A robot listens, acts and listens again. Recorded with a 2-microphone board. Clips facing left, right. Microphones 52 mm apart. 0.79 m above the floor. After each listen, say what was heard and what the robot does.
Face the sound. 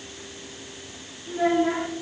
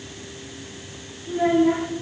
Turn 30° left.
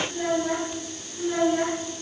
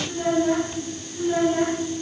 So it is at 30° right. Turn 30° right.
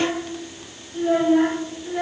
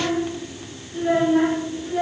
The child speaking is now 10° right. Turn 10° right.
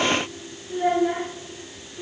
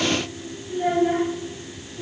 Found it: a child speaking, straight ahead.